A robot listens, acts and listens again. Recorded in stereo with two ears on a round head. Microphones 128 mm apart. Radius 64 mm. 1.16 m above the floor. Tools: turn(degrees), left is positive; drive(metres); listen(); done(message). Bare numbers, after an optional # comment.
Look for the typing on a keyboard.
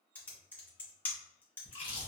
turn(30)
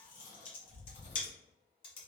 # So it is at 140° left.
turn(140)
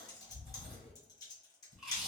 # The typing on a keyboard is now 30° left.
turn(30)
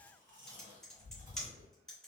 done("Facing the typing on a keyboard.")